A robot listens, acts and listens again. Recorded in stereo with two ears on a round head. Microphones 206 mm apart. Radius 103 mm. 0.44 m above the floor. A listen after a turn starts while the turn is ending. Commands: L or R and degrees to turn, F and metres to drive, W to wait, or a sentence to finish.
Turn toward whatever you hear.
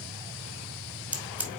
R30
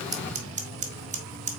R145
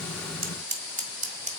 R35
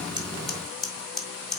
Found it: scissors, straight ahead.